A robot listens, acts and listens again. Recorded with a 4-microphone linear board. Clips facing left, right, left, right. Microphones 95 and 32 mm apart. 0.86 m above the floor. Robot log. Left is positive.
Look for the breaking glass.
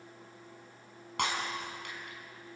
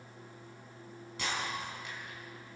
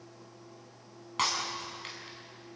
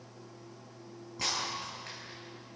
note: The breaking glass: about 70° left or 110° left.
cmd yaw +70
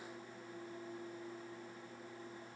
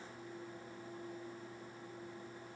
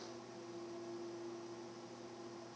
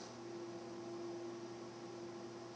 cmd idle
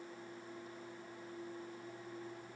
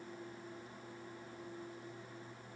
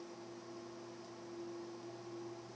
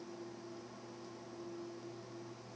end: I heard breaking glass, but can't make it out now. It was about straight ahead or 40° left.